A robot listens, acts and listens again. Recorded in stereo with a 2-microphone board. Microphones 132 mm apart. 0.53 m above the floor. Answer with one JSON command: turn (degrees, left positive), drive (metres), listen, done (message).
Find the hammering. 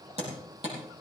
{"turn": -55}
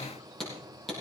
{"done": "Facing the hammering, over 4 m away."}